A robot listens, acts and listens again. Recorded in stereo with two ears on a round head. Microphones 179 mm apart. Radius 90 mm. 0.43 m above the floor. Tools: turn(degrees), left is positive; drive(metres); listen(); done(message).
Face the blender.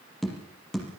listen()
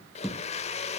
turn(degrees=30)
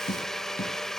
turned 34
done("Facing the blender, under 1 m away.")